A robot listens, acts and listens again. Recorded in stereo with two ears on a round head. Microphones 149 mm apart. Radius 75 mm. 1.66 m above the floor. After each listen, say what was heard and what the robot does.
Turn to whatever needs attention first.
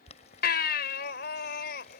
The baby crying: about 65° left or 115° left. Turn 65° left.
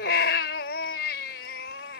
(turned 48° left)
So it is at 65° left. Turn 65° left.
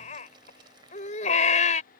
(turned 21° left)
The baby crying is now 45° left. Turn 45° left.
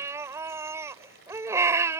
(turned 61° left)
The baby crying is now 15° right. Turn 15° right.
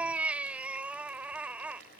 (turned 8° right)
The baby crying is now 10° right. Turn 10° right.
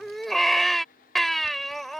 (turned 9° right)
Found it: a baby crying, straight ahead.